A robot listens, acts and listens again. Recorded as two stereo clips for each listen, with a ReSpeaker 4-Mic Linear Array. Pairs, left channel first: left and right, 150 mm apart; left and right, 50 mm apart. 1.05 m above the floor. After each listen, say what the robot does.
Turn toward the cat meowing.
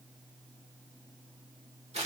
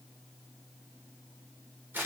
Keep listening.
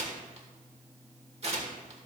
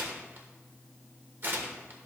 Keep listening.
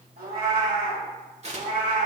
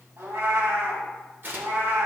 Turn 90° right.
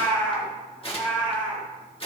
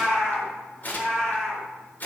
Turn 10° left.
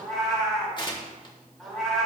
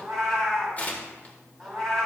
Facing the cat meowing, over 4 m away.